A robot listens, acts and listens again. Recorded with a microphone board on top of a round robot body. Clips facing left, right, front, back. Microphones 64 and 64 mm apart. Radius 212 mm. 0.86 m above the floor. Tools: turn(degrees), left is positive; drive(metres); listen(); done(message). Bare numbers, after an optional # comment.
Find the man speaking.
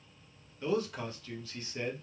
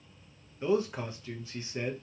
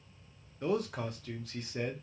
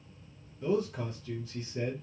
# The man speaking: 20° right.
turn(-20)
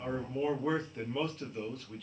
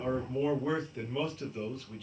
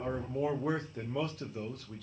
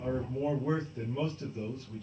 done("Found it: a man speaking, straight ahead, under 1 m away.")